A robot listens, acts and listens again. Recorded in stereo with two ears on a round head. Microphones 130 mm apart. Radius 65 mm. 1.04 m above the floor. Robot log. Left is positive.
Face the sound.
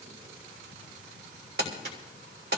cmd yaw -90
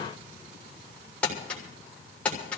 note: So it is at 10° left.
cmd yaw +10
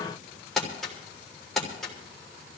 end: Found it: crumpling, straight ahead, 2 to 4 m away.